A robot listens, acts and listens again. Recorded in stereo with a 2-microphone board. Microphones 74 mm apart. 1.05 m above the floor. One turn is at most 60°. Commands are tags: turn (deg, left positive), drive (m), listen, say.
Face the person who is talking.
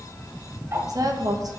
<turn deg="-60"/>
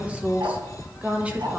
<turn deg="-20"/>
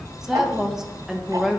<turn deg="-10"/>
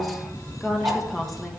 <say>Facing the woman speaking.</say>